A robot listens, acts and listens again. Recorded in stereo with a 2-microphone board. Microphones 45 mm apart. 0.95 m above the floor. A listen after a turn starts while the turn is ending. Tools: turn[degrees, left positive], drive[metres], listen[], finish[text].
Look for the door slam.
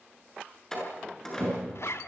Action: turn[30]
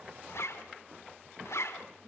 Action: listen[]
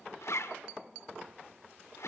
Action: finish[I heard a door slam, but can't make it out now. It was about 20° right or 140° left.]